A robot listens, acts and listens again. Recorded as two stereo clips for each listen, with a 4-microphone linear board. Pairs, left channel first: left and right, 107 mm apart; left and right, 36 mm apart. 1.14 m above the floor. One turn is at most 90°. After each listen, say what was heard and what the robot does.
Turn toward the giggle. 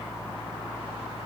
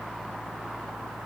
Keep listening.
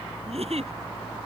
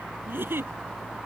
The giggle: about 75° right or 105° right. Turn 75° right.
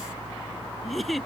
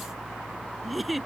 Found it: a giggle, straight ahead.